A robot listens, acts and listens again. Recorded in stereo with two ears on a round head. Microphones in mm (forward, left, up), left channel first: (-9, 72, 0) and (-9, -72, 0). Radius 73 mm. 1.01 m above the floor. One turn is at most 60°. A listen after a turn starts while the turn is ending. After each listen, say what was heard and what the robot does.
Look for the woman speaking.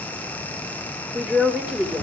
Turn 30° right.
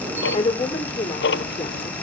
So it is at 25° left. Turn 25° left.
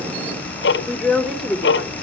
Facing the woman speaking.